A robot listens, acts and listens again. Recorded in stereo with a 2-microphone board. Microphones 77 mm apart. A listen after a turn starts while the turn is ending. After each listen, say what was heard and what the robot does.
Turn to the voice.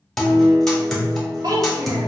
The child speaking: about 55° right or 125° right. Turn 55° right.
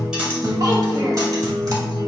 Keep listening.
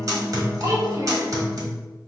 So it is at 65° right. Turn 65° right.
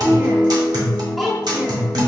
Found it: a child speaking, straight ahead, 1 to 2 m away.